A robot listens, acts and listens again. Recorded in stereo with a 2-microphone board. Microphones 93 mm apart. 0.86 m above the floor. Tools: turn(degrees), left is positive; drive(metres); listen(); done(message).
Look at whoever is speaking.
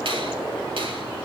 listen()
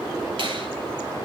listen()
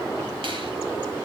done("I can't make out anyone speaking.")